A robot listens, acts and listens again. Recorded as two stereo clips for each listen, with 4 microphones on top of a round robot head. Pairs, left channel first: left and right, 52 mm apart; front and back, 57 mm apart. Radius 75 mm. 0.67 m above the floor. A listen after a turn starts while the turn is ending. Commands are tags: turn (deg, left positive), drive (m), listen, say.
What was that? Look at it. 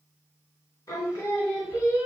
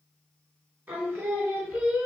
<turn deg="130"/>
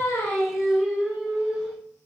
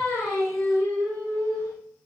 <say>Found it: singing, straight ahead, 2 to 4 m away.</say>